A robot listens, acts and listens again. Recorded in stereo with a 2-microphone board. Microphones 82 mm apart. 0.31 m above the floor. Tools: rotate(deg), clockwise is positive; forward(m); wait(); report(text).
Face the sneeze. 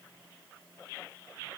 wait()
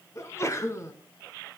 rotate(-35)
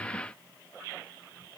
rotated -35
wait()
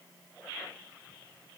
report("I heard a sneeze, but can't make it out now. It was about straight ahead or 110° left.")